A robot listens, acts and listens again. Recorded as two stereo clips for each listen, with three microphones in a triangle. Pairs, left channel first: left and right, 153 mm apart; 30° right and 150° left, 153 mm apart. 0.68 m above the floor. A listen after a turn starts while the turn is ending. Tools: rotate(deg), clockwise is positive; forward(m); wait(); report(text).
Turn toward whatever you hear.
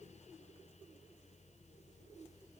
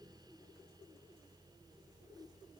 wait()
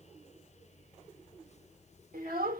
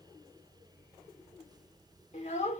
rotate(70)
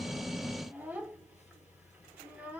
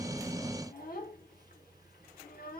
rotate(10)
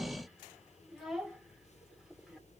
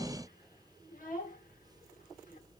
report("Found it: a child speaking, straight ahead, 1 to 2 m away.")